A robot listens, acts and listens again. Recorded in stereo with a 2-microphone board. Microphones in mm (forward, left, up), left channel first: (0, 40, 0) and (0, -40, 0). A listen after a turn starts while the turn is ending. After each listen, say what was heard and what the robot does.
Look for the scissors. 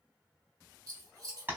The scissors: about 55° right or 125° right. Turn 55° right.
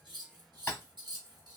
So it is at 70° right. Turn 70° right.
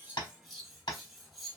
Facing the scissors, 1 to 2 m away.